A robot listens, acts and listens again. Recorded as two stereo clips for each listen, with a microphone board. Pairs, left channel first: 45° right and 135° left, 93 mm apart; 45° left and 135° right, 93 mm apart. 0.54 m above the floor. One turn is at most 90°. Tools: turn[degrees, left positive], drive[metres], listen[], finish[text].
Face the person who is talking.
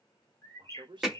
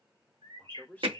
Thought: The man speaking: 115° left.
Action: turn[90]
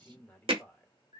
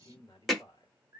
Thought: The man speaking is now 25° left.
Action: turn[25]
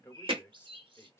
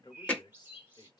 Thought: The man speaking is now 15° left.
Action: turn[15]
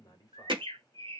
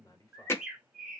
Action: finish[Facing the man speaking, 1 to 2 m away.]